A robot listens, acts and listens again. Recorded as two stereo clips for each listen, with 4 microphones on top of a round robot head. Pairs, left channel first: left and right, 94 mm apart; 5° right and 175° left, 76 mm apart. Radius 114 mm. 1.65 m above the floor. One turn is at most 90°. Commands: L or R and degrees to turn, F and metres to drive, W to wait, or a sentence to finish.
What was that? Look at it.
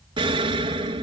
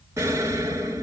R90
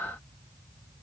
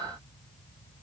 R30
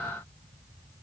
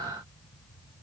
I heard an explosion from this way, but can't make it out now.